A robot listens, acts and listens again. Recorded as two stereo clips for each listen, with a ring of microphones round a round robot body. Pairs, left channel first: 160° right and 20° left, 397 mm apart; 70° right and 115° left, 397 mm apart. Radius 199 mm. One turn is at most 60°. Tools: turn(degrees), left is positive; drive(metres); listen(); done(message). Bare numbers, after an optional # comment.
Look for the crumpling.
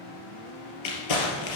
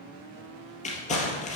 # The crumpling: 140° right.
turn(-60)
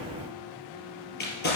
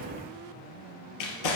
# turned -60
# The crumpling is now 90° right.
turn(-60)
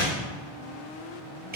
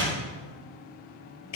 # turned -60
# The crumpling is now 45° right.
turn(-45)
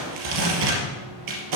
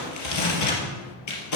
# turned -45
# The crumpling is now 20° right.
turn(-20)
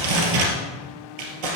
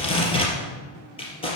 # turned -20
# The crumpling is now 10° left.
turn(10)
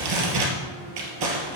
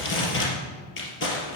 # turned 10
done("Facing the crumpling, 2 to 4 m away.")